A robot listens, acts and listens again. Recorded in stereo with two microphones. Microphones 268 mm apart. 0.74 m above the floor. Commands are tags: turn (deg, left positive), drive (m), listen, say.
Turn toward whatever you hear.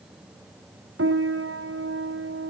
<turn deg="-55"/>
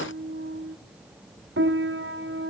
<turn deg="-60"/>
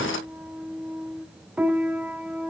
<say>Facing the piano.</say>